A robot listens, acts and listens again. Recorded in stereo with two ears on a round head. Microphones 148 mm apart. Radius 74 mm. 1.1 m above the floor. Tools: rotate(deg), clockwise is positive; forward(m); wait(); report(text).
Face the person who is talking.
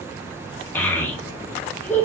rotate(-30)
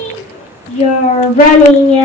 rotate(-135)
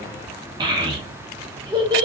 rotate(25)
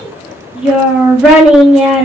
report("Found it: a child speaking, straight ahead, under 1 m away.")